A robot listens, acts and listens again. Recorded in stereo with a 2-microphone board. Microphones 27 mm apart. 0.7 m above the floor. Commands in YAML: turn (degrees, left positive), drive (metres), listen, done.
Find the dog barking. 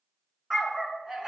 turn: -25
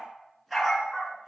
turn: -30
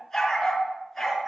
done: "Found it: a dog barking, straight ahead."